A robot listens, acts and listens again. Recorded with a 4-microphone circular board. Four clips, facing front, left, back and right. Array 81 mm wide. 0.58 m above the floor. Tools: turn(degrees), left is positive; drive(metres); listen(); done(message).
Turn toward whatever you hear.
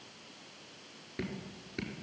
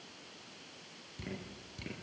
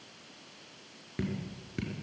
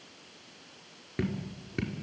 turn(degrees=-100)
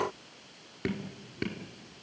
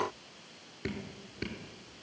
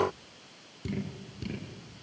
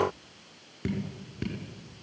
done("Found it: dripping, straight ahead.")